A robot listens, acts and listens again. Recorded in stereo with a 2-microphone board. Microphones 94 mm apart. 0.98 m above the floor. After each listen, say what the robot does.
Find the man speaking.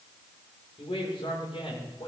Turn 90° left.
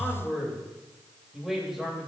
Found it: a man speaking, straight ahead, over 4 m away.